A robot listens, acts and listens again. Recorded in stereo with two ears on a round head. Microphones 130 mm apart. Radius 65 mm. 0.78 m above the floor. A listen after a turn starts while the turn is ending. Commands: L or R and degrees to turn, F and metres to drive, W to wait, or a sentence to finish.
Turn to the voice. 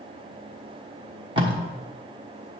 W
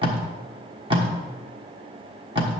W
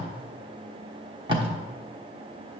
I can't make out anyone speaking, only tape being pulled.